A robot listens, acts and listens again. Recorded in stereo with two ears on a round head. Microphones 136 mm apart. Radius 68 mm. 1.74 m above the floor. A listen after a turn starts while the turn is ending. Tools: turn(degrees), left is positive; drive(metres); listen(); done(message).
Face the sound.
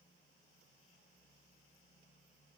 listen()
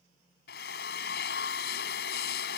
turn(degrees=90)
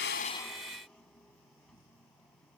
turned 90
listen()
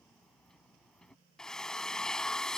done("Facing the drill.")